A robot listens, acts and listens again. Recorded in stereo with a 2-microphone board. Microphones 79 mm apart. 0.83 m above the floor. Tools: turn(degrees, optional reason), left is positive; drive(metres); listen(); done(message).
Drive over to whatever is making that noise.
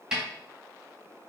turn(degrees=-30)
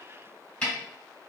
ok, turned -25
turn(degrees=15, reason="So it is at 15° left.")
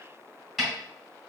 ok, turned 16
drive(metres=1.0)
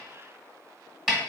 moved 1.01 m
drive(metres=1.0)
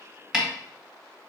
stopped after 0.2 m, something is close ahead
turn(degrees=-10, reason="The snare drum is now 10° right.")
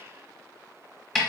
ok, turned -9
done("I am next to the snare drum.")